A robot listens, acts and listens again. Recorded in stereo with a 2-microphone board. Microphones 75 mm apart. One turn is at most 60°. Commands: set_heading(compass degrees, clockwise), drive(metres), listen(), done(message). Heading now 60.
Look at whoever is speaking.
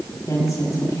set_heading(15)
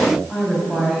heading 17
done("Facing the woman speaking.")